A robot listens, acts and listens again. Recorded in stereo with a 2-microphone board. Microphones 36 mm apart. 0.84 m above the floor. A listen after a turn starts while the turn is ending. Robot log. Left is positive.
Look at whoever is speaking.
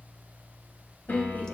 note: The woman speaking: about 60° left or 120° left.
cmd yaw +60
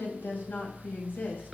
note: So it is at 60° left.
cmd yaw +60
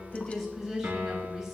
note: The woman speaking is now 10° right.
cmd yaw -10
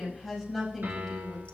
end: Facing the woman speaking.